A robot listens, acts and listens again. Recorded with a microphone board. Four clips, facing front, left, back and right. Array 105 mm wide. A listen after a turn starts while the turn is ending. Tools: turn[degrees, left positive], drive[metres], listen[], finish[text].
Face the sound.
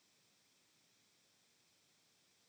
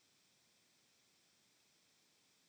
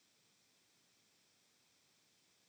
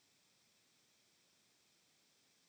Action: listen[]
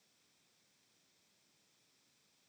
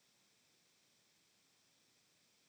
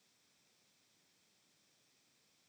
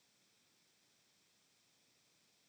Action: listen[]
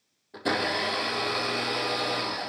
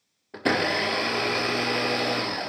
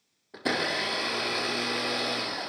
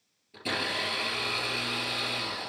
Thought: The blender: 95° left.
Action: turn[95]
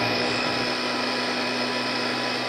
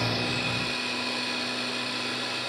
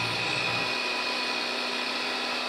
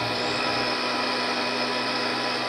Thought: The blender is now 35° right.
Action: turn[-35]
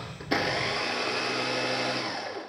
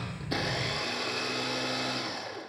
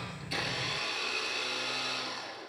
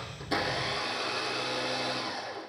Thought: The blender is now 15° left.
Action: turn[15]
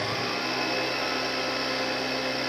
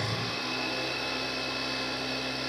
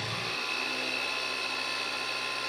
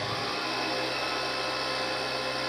Action: finish[Found it: a blender, straight ahead, 2 to 4 m away.]